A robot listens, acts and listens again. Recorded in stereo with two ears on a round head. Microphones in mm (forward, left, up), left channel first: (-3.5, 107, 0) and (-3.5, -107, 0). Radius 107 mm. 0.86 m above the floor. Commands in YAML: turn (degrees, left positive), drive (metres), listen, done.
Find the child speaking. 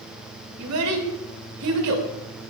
turn: -75
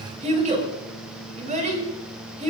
turn: -30
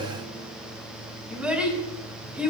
done: "Found it: a child speaking, straight ahead, over 4 m away."